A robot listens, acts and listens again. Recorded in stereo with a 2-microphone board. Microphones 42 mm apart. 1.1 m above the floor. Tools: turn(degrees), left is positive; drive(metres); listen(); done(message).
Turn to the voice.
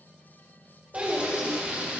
turn(degrees=-35)
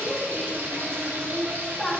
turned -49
turn(degrees=15)
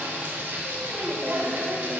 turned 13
listen()
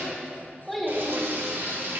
done("Found it: a child speaking, straight ahead, 1 to 2 m away.")